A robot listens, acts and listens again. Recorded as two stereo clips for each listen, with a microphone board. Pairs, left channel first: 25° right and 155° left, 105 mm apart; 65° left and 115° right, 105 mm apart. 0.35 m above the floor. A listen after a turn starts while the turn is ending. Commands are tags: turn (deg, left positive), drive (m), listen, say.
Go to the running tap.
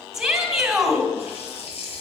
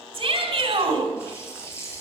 <drive m="1.0"/>
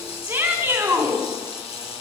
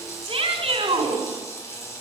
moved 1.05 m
<drive m="1.0"/>
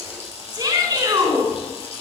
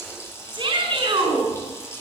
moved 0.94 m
<drive m="1.0"/>
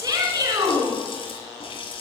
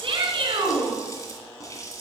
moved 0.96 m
<turn deg="10"/>
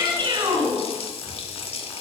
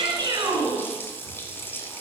<drive m="1.0"/>
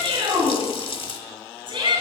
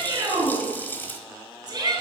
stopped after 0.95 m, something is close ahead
<say>Arrived at the running tap, straight ahead.</say>